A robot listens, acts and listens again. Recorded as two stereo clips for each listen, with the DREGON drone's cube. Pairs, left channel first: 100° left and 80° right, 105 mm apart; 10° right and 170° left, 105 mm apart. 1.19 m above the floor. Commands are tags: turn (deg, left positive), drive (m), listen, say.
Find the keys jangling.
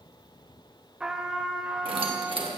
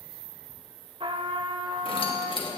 <turn deg="-45"/>
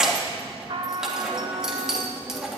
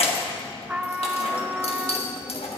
<say>Found it: keys jangling, straight ahead.</say>